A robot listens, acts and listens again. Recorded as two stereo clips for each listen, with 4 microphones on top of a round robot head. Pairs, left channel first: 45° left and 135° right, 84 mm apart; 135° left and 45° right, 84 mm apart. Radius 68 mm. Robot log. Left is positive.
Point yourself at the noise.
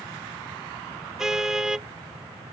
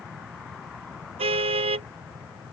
note: The car horn: 50° right.
cmd yaw -50
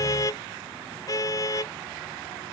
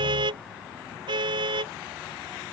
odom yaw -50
note: The car horn is now 10° right.
cmd yaw -10
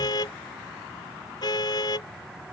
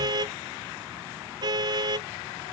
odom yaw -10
end: Found it: a car horn, straight ahead.